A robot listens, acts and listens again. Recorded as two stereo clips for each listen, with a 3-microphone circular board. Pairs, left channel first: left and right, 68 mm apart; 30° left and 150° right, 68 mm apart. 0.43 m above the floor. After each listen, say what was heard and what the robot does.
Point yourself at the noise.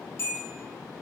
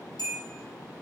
The bell: 40° left. Turn 40° left.
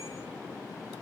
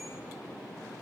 Keep listening.
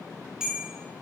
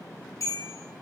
The bell is now 10° right. Turn 10° right.
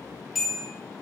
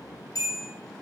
Found it: a bell, straight ahead.